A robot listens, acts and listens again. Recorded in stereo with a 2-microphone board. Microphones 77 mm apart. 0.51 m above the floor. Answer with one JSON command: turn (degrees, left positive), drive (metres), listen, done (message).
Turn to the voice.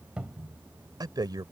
{"turn": -60}
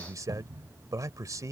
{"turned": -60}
{"turn": -50}
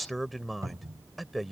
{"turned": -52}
{"done": "Found it: a man speaking, straight ahead."}